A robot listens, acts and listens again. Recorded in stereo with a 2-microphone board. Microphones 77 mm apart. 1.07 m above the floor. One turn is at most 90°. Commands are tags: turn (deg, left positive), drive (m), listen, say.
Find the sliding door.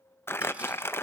<listen/>
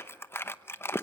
<listen/>
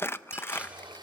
<turn deg="-75"/>
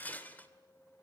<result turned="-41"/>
<listen/>
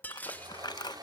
<turn deg="-60"/>
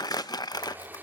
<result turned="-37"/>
<turn deg="-25"/>
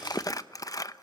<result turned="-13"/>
<turn deg="-10"/>
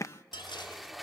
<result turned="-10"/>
<say>Facing the sliding door.</say>